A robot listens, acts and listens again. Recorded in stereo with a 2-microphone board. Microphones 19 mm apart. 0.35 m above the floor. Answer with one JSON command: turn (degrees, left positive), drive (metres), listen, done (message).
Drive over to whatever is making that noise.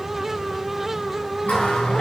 {"turn": 90}
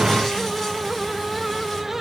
{"listen": true}
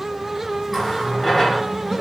{"drive": 1.0}
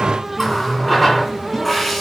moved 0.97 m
{"drive": 1.0}
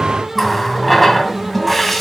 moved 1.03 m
{"drive": 1.0}
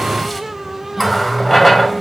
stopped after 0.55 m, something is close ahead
{"done": "Arrived at the running tap, straight ahead."}